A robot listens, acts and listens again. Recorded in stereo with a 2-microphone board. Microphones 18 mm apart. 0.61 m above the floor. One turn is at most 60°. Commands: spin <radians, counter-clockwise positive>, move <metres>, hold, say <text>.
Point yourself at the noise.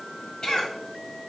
spin 0.96
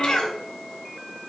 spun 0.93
spin 1.05
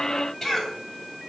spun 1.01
spin 0.17
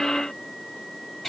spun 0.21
say Facing the cough, 2 to 4 m away.